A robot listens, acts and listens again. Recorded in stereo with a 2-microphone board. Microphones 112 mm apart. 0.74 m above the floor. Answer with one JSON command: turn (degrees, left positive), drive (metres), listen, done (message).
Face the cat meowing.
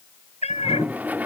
{"turn": 90}
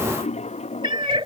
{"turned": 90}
{"turn": -50}
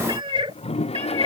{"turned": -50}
{"turn": -65}
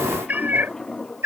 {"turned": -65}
{"turn": -25}
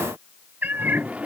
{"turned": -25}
{"turn": -15}
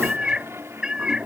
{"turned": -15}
{"turn": -10}
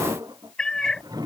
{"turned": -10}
{"done": "Facing the cat meowing."}